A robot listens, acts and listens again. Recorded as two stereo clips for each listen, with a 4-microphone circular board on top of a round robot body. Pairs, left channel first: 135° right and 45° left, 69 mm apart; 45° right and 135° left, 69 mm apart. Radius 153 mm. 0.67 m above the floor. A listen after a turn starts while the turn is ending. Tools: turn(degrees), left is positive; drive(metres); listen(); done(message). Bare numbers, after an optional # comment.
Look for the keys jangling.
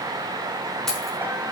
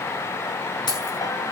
# The keys jangling: 50° right.
turn(-50)
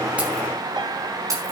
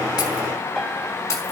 done("Facing the keys jangling.")